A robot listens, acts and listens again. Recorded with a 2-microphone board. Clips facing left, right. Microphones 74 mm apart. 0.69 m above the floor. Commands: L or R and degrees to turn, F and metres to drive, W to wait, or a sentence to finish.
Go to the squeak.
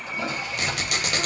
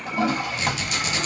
L60
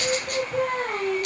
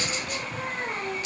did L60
W
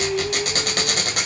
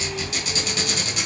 L60
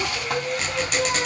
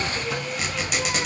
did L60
F1.0
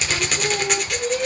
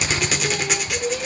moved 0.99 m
F1.0
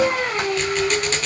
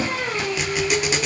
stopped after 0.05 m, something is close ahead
I am next to the squeak.